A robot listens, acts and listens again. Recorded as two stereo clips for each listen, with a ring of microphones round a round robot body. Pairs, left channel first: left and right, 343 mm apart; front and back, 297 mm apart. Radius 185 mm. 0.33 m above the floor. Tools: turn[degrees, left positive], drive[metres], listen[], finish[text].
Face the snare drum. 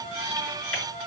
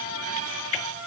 Action: listen[]
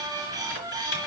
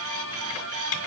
Action: listen[]
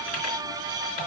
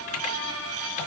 Action: finish[I can't make out a snare drum.]